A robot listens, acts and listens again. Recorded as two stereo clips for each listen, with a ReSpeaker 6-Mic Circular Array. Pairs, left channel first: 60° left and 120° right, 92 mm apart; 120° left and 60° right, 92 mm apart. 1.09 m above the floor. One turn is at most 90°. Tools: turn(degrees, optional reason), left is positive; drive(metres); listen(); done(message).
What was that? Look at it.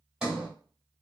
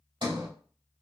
turn(degrees=-40, reason="The sliding door: 40° right.")
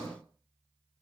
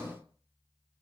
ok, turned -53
turn(degrees=15, reason="The sliding door is now 15° left.")
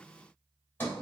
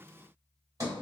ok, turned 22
turn(degrees=-10, reason="The sliding door is now 10° right.")
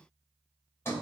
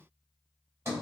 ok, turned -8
done("Found it: a sliding door, straight ahead.")